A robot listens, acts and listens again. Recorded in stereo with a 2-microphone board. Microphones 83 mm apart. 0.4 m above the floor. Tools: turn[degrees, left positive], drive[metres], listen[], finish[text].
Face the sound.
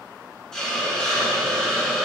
Action: turn[30]
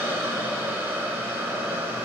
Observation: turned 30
Thought: So it is at 20° right.
Action: turn[-20]
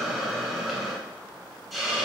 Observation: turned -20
Action: finish[Facing the hiss, 1 to 2 m away.]